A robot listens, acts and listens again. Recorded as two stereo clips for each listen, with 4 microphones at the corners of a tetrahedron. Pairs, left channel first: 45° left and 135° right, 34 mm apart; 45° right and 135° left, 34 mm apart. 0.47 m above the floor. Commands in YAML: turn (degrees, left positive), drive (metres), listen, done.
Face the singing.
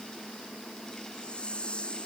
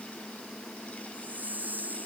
listen: true
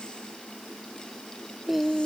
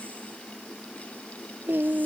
turn: 140
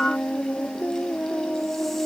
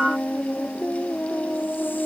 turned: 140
done: "Found it: singing, straight ahead."